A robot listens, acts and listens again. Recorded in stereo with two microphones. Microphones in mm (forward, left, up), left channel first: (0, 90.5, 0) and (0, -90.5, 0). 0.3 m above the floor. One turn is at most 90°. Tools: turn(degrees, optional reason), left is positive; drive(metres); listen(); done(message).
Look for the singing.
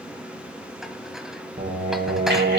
turn(degrees=-70, reason="The singing: about 70° right or 110° right.")
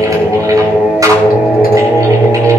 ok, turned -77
turn(degrees=-15, reason="So it is at 15° right.")
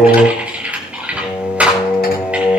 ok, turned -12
turn(degrees=-10, reason="The singing is now 10° right.")
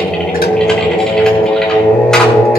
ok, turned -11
done("Facing the singing.")